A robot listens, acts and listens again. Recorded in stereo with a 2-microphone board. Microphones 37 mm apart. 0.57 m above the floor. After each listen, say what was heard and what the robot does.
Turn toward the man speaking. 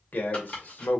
The man speaking: about 60° left or 120° left. Turn 60° left.
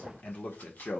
So it is at 45° left. Turn 45° left.
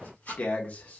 The man speaking is now 45° left. Turn 45° left.
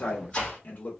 The man speaking is now 50° left. Turn 50° left.
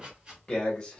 The man speaking is now 20° left. Turn 20° left.
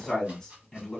Facing the man speaking.